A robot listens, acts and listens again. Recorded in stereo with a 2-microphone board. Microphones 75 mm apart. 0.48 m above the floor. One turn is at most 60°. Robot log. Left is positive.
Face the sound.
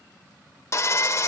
note: The sawing: about 45° left or 135° left.
cmd yaw +45
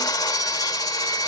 note: So it is at 85° left.
cmd yaw +60
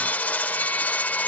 note: The sawing is now 25° left.
cmd yaw +25
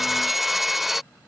end: Found it: sawing, straight ahead.